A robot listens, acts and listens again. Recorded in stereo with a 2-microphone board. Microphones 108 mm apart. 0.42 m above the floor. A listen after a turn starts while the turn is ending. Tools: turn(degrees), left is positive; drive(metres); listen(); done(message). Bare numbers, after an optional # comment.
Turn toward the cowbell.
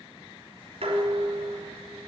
listen()
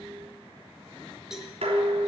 turn(-30)
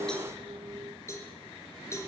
# So it is at 25° left.
turn(25)
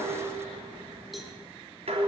listen()
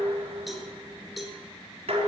done("Facing the cowbell.")